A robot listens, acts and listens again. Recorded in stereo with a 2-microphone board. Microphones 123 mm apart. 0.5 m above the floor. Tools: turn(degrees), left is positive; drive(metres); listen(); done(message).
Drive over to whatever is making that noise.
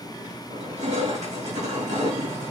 turn(degrees=-75)
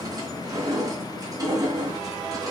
turn(degrees=-30)
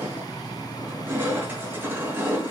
turn(degrees=-15)
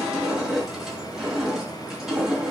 drive(metres=1.0)
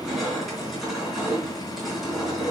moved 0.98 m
drive(metres=1.0)
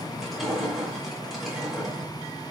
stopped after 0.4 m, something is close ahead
done("Something is in my way. I am facing the crushing but have not reached it.")